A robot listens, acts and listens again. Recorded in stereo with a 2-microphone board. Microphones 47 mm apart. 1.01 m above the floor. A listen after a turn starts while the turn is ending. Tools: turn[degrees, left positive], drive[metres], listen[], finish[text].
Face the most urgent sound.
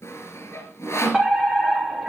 Action: turn[30]
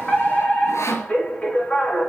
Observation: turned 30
Thought: So it is at 145° left.
Action: turn[145]
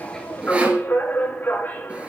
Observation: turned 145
Thought: The fire alarm is now 45° left.
Action: turn[45]
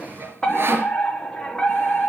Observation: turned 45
Thought: The fire alarm is now 15° left.
Action: turn[15]
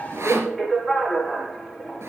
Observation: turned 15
Action: finish[Found it: a fire alarm, straight ahead.]